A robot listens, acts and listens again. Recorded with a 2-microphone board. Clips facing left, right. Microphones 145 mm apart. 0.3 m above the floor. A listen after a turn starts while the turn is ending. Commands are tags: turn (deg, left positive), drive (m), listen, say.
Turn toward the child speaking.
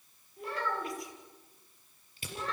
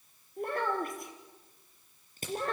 <turn deg="-50"/>
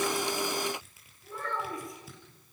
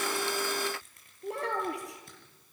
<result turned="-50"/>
<turn deg="-80"/>
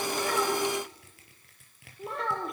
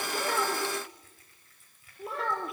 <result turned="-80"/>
<say>Facing the child speaking, over 4 m away.</say>